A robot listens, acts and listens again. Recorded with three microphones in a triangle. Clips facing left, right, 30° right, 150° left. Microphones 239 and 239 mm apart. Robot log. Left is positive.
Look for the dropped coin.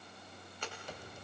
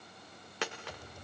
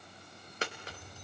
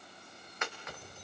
note: The dropped coin: 85° right.
cmd yaw -85
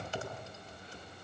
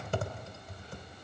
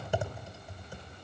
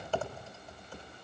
end: Facing where the dropped coin came from. I can't hear it now.